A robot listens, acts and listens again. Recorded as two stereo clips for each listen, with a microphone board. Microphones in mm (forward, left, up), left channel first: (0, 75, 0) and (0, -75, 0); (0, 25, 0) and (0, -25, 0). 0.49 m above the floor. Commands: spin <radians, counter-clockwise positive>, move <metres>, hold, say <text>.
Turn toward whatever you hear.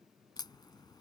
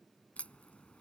spin 0.52
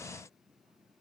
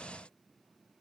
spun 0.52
hold
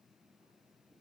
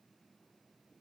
say I heard a crack, but can't make it out now. It was about straight ahead or 120° left.